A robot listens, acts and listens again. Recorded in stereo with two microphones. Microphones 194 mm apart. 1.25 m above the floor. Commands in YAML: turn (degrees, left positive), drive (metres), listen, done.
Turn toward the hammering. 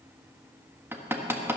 turn: -30
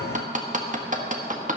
turn: -140
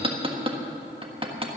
turn: -25
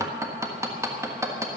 turn: -15
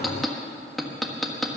done: "Facing the hammering."